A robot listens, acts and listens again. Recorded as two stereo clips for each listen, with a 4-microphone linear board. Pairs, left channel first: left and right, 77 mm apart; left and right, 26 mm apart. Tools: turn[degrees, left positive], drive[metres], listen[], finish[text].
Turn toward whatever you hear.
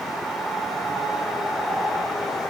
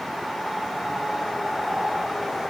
Action: listen[]
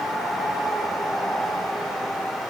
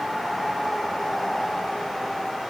Action: listen[]
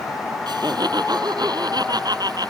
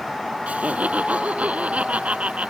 Thought: The laughter: about 60° right or 120° right.
Action: turn[-60]
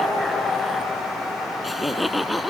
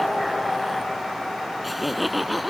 Action: finish[Facing the laughter.]